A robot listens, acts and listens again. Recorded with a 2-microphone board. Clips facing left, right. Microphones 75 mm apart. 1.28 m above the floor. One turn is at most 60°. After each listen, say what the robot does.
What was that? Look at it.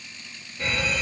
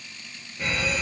Turn 30° right.
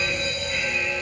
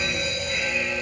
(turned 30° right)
Turn 60° right.
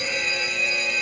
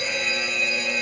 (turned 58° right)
Turn 60° right.
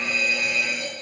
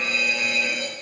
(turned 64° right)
Turn 15° right.
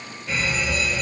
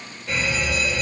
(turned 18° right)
Facing the fire alarm, 2 to 4 m away.